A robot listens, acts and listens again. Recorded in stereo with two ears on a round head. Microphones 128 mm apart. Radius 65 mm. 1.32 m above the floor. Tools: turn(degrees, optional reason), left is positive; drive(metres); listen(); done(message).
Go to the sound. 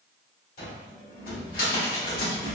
turn(degrees=70, reason="The cupboard door: about 70° left or 110° left.")
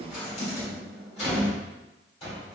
turn(degrees=40, reason="So it is at 40° left.")
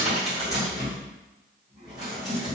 drive(metres=1.0)
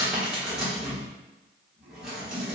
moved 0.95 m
drive(metres=1.0)
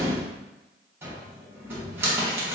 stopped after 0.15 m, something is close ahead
turn(degrees=-15, reason="The cupboard door is now 15° right.")
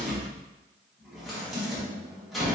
done("Arrived at the cupboard door, straight ahead.")